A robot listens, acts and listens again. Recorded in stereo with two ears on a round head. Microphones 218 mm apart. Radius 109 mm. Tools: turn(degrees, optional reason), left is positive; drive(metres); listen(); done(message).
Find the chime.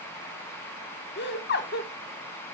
listen()
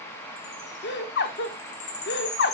turn(degrees=30, reason="The chime: about 30° left or 150° left.")
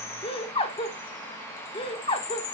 turn(degrees=115, reason="So it is at 115° left.")
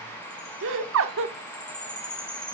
done("Facing the chime, 1 to 2 m away.")